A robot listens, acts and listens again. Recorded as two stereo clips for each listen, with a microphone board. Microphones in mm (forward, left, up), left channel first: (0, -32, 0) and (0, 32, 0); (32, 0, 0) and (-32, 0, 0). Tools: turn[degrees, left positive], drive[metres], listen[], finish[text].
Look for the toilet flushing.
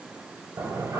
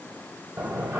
Thought: The toilet flushing: 115° left.
Action: turn[115]
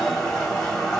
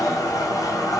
Thought: The toilet flushing is now 10° right.
Action: turn[-10]
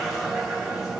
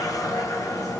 Action: finish[Found it: a toilet flushing, straight ahead, 1 to 2 m away.]